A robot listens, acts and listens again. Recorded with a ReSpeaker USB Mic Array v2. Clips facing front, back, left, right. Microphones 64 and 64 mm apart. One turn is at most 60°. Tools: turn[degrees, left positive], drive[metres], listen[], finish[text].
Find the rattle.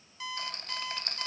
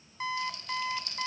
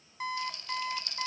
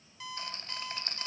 Thought: The rattle: 40° right.
Action: turn[-40]
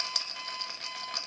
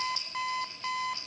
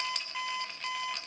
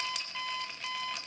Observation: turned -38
Action: finish[Facing the rattle, 1 to 2 m away.]